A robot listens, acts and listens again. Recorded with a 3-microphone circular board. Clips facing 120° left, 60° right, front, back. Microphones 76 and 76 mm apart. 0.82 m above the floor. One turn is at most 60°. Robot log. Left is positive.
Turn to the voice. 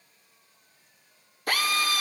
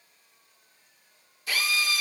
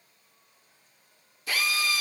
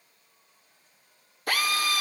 cmd idle
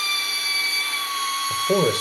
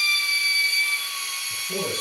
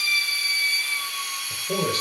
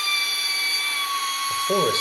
note: The man speaking: 120° left.
cmd yaw +60
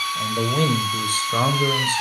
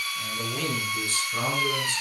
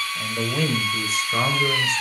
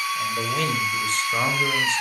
note: The man speaking is now 90° left.
cmd yaw +60
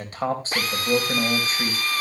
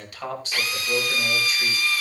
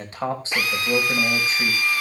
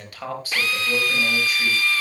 note: The man speaking is now 65° left.
cmd yaw +60
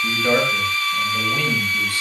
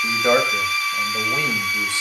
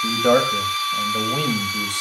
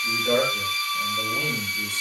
end: Found it: a man speaking, straight ahead.